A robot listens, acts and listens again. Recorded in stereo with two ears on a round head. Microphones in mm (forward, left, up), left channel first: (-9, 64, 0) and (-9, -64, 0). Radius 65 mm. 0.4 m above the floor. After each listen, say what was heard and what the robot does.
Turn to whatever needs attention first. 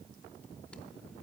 Keep listening.
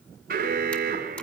The alarm: about 65° right or 115° right. Turn 65° right.
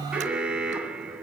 Found it: an alarm, straight ahead, 2 to 4 m away.